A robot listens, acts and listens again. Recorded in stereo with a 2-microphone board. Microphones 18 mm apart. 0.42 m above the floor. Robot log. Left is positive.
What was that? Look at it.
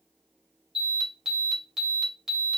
note: The alarm: about 20° right or 160° right.
cmd yaw -20
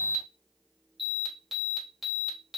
end: Facing the alarm.